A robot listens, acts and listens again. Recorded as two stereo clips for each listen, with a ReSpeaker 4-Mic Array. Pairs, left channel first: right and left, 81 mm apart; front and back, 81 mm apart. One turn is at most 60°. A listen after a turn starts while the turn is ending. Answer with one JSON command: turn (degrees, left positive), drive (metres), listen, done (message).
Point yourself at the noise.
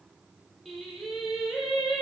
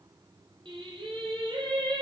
{"turn": 60}
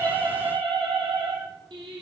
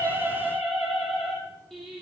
{"turn": 60}
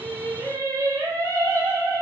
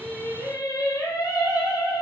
{"turn": 40}
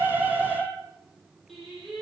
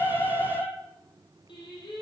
{"done": "Found it: singing, straight ahead, over 4 m away."}